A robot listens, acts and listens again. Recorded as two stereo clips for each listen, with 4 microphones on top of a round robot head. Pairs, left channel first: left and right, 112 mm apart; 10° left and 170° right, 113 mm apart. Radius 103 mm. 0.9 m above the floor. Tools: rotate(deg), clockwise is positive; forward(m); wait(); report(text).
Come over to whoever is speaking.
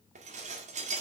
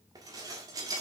wait()
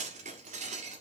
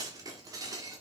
wait()
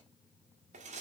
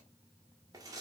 report("I can't make out anyone speaking to turn to.")